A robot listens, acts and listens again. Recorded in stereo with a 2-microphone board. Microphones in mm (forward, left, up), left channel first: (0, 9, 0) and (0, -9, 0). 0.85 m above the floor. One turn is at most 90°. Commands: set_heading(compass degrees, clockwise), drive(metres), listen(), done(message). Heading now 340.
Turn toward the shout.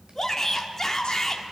set_heading(310)
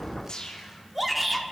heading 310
done("Found it: a shout, straight ahead, 1 to 2 m away.")